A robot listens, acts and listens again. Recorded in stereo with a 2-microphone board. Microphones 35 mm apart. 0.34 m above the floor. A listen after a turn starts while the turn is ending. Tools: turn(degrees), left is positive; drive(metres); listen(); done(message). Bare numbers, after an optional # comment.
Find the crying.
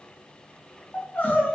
# The crying: about 65° left or 115° left.
turn(65)
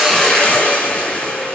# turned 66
listen()
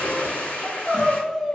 done("Facing the crying.")